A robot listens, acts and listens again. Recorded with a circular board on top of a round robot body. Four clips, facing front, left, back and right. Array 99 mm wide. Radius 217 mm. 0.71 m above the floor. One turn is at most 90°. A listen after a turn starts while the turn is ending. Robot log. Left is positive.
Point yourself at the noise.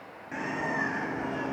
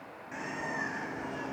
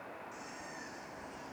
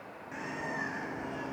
end: Facing the bird.